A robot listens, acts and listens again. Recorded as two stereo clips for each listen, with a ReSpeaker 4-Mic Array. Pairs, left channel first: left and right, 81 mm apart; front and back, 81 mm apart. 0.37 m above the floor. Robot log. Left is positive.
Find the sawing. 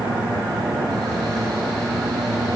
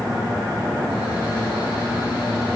cmd idle
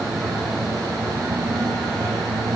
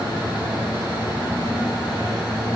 cmd idle
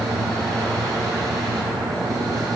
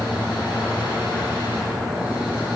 end: I can't make out sawing to turn to.